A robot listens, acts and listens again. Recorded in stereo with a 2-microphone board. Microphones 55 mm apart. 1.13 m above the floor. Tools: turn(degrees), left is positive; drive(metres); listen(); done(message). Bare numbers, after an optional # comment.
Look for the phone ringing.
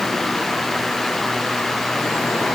listen()
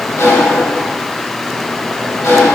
listen()
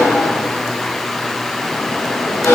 done("I can't make out a phone ringing to turn to.")